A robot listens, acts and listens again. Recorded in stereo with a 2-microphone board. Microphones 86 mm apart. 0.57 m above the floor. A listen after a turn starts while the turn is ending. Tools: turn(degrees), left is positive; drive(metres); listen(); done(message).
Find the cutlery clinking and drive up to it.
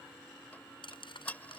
turn(degrees=70)
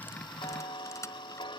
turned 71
turn(degrees=35)
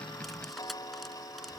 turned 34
listen()
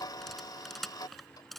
drive(metres=1.0)
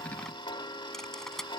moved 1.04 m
drive(metres=1.0)
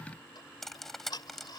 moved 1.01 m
drive(metres=1.0)
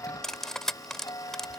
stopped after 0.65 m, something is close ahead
done("Arrived at the cutlery clinking, straight ahead.")